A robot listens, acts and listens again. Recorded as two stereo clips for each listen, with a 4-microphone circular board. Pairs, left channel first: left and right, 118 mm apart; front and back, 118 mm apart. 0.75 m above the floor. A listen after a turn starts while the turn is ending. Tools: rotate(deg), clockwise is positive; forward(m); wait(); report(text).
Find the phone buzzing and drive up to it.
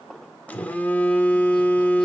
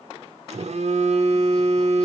rotate(-165)
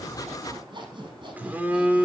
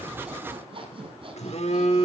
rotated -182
rotate(15)
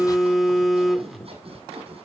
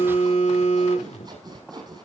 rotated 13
forward(1.0)
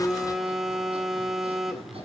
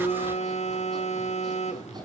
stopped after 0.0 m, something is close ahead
report("Something is in my way. I am facing the phone buzzing but have not reached it.")